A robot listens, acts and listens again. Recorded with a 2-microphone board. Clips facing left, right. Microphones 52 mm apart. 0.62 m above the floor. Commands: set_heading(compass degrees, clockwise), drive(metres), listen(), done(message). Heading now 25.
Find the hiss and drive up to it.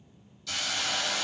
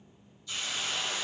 set_heading(295)
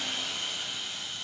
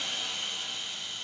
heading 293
drive(1.0)
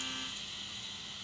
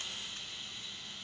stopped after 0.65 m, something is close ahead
done("Something is in my way. I am facing the hiss but have not reached it.")